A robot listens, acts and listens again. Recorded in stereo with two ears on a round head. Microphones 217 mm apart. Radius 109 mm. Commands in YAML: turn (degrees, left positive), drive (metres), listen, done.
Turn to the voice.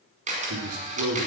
turn: -65
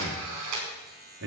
turn: -50
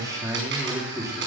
turn: -15
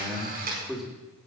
done: "Found it: a man speaking, straight ahead, 2 to 4 m away."